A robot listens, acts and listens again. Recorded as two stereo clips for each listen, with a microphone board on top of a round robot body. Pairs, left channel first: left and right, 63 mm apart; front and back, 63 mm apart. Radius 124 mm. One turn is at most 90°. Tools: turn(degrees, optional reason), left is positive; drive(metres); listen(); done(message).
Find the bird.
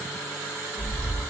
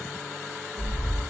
turn(degrees=90, reason="The bird: 165° left.")
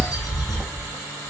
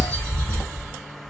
turn(degrees=75, reason="The bird is now 75° left.")
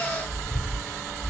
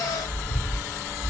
turn(degrees=25, reason="The bird is now 25° left.")
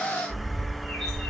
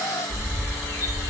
done("Facing the bird, 1 to 2 m away.")